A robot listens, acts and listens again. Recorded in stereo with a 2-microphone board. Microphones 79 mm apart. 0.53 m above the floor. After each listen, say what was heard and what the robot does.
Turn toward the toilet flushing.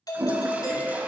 The toilet flushing: about 20° right or 160° right. Turn 20° right.
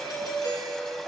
Keep listening.
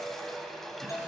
Facing the toilet flushing.